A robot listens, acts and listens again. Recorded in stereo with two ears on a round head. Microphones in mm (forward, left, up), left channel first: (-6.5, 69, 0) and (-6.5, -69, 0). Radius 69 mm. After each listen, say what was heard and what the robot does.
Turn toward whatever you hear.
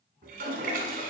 The toilet flushing: about 60° right or 120° right. Turn 60° right.
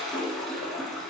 Facing the toilet flushing, 1 to 2 m away.